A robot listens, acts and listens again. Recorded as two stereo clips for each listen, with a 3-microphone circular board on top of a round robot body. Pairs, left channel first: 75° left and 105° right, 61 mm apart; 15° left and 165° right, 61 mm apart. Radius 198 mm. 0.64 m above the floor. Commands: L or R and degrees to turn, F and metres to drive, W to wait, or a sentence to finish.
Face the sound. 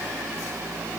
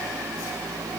W
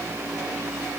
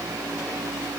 W
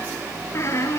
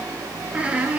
L125
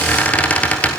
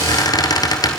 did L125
L10
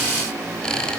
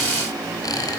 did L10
Facing the squeak.